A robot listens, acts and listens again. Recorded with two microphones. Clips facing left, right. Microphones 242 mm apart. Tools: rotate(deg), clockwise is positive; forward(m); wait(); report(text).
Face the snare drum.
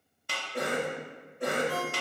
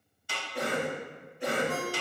rotate(-65)
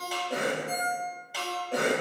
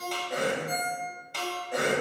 report("Found it: a snare drum, straight ahead, 1 to 2 m away.")